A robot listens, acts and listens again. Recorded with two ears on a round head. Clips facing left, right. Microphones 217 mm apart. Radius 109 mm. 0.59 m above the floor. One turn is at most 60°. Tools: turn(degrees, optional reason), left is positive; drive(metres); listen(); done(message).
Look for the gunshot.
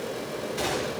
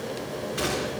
turn(degrees=-15, reason="The gunshot: about 15° right or 165° right.")
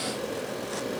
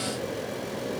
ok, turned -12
listen()
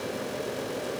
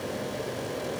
done("I heard a gunshot, but can't make it out now. It was about 5° right or 150° right.")